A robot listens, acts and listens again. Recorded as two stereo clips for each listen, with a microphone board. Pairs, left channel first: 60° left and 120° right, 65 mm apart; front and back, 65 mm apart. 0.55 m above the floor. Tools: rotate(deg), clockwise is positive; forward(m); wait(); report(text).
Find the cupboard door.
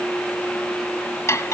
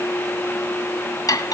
wait()
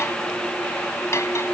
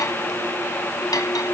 wait()
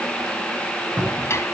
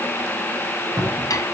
rotate(175)
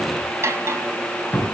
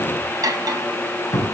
report("Facing the cupboard door.")